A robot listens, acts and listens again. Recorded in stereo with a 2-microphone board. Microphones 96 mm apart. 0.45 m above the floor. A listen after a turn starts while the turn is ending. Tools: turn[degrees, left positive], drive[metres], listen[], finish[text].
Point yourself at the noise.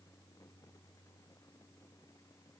Action: listen[]
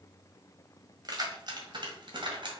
Thought: The keys jangling: about 60° right or 120° right.
Action: turn[-60]
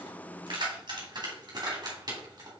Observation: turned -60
Thought: So it is at 45° right.
Action: turn[-45]
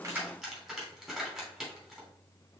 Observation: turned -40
Action: finish[Found it: keys jangling, straight ahead.]